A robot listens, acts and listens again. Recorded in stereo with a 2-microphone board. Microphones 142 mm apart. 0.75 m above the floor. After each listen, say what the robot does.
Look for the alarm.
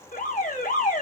Turn 75° left.
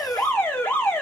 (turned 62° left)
Turn 15° left.
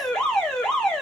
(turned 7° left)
Facing the alarm.